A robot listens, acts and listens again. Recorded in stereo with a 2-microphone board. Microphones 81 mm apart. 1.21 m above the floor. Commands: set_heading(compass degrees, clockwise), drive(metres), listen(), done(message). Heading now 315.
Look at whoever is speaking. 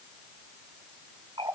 listen()
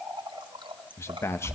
set_heading(285)
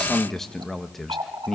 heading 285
done("Found it: a man speaking, straight ahead, 1 to 2 m away.")